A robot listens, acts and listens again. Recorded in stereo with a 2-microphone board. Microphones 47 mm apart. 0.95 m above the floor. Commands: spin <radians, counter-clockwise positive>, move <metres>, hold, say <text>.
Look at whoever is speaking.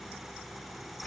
hold
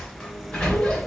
hold
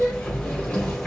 say I can't make out anyone speaking to turn to.